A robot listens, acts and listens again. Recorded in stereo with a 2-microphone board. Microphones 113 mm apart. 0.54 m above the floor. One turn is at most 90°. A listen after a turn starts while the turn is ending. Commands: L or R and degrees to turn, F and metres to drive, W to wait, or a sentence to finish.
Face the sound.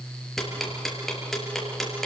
L30
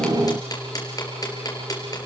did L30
L90
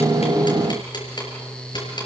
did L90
L45
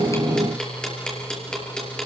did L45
L10
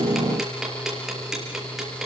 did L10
Facing the ticking.